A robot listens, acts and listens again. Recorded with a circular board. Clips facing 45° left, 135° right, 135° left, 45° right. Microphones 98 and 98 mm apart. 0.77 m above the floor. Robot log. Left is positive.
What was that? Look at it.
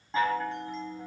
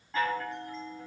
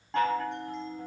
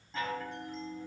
note: The chime: 110° left.
cmd yaw +110
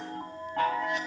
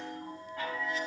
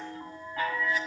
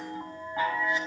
note: The chime is now 25° left.
cmd yaw +25
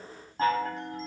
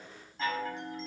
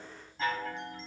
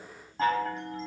end: Found it: a chime, straight ahead.